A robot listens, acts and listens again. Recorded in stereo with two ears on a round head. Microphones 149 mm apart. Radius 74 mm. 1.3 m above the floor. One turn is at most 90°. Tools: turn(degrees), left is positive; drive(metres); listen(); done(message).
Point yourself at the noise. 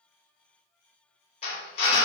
turn(degrees=40)
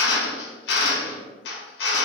turn(degrees=90)
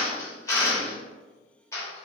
turn(degrees=20)
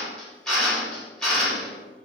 done("Found it: a drill, straight ahead.")